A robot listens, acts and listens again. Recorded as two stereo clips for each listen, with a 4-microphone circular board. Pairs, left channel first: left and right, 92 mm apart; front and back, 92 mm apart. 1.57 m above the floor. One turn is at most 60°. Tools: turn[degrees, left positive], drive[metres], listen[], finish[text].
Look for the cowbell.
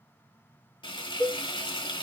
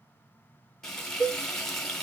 Thought: The cowbell: 170° right.
Action: turn[-60]
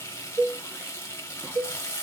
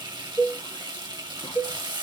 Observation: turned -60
Thought: The cowbell is now 100° right.
Action: turn[-60]
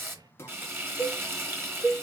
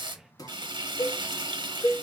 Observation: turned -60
Thought: The cowbell is now 40° right.
Action: turn[-40]
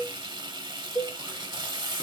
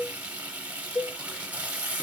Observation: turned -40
Action: finish[Found it: a cowbell, straight ahead.]